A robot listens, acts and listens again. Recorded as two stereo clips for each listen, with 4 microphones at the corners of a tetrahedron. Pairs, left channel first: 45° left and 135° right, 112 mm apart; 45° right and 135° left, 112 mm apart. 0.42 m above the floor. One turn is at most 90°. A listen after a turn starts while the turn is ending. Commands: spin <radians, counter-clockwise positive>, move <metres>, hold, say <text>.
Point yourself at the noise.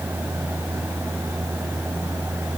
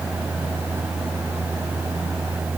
hold
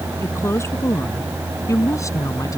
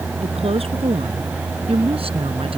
spin 1.57
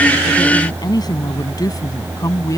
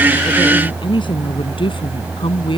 spin -0.17
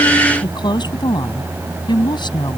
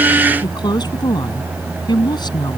say Facing the woman speaking.